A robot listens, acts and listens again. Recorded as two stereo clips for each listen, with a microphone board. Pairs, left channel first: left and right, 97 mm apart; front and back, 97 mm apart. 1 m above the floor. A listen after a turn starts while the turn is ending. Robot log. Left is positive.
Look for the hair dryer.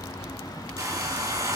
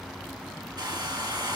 note: The hair dryer: 140° right.
cmd yaw -140
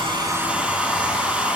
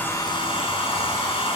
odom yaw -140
note: The hair dryer is now 10° right.
cmd yaw -10
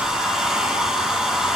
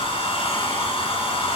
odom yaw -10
end: Found it: a hair dryer, straight ahead, 2 to 4 m away.